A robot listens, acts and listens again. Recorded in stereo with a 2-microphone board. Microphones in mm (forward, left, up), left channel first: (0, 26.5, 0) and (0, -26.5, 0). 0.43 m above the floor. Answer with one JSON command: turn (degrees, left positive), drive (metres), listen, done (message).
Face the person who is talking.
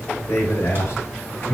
{"turn": 50}
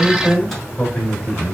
{"turn": 15}
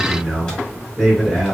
{"done": "Facing the man speaking, 2 to 4 m away."}